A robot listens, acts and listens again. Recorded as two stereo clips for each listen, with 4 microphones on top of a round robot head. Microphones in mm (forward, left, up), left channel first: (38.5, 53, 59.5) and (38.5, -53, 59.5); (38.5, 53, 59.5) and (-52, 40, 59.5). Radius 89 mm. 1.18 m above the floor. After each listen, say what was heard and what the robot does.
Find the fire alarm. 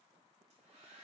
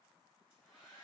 Keep listening.
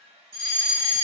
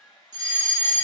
The fire alarm: 140° right. Turn 140° right.
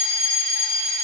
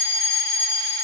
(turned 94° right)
The fire alarm is now 50° right. Turn 50° right.
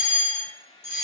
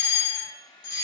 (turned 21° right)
The fire alarm is now 25° right. Turn 25° right.
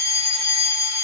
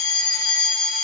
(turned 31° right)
Facing the fire alarm, 2 to 4 m away.